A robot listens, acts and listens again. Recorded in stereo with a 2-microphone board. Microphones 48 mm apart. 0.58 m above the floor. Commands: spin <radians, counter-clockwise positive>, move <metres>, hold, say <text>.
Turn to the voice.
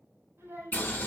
spin -1.57
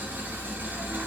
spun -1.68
hold
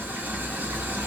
hold
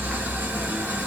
say I heard a child speaking from this way, but can't make it out now.